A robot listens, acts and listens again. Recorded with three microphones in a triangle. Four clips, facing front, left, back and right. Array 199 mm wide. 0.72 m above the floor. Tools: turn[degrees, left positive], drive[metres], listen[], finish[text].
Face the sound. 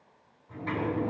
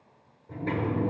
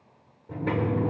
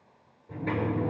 Thought: The sliding door: straight behind.
Action: turn[180]
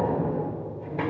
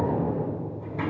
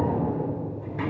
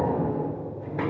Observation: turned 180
Thought: The sliding door is now 45° right.
Action: turn[-45]
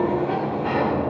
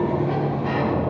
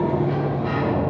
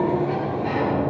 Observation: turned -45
Action: finish[Found it: a sliding door, straight ahead, 2 to 4 m away.]